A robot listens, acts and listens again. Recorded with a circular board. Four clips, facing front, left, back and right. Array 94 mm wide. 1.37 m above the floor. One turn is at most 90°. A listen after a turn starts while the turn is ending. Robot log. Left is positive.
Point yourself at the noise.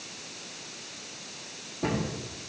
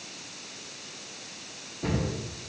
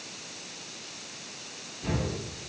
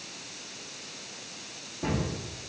note: The cupboard door: 20° right.
cmd yaw -20
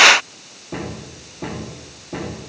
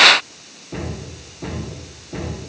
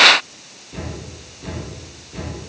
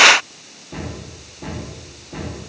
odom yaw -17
end: Facing the cupboard door, 2 to 4 m away.